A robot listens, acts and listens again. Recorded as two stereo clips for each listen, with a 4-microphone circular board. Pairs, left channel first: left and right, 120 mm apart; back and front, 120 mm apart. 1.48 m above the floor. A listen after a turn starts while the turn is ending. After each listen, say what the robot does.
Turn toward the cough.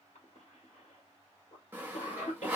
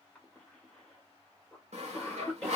Turn 95° left.
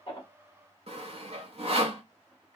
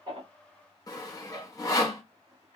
Keep listening.
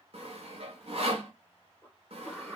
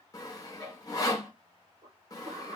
Turn 10° right.
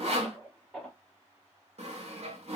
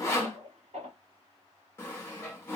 Found it: a cough, straight ahead, under 1 m away.